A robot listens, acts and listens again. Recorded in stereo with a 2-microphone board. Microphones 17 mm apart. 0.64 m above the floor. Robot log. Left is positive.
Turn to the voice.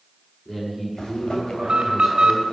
note: The man speaking: about 15° left or 165° left.
cmd yaw +15
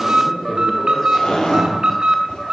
note: So it is at 150° left.
cmd yaw +150
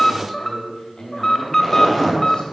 note: The man speaking is now 45° left.
cmd yaw +45
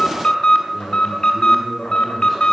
end: Facing the man speaking, over 4 m away.